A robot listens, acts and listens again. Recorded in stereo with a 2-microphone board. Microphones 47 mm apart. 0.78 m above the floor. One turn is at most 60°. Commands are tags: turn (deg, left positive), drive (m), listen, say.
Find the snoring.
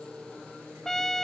<listen/>
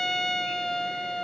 <listen/>
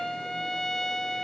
<say>I can't make out snoring to turn to.</say>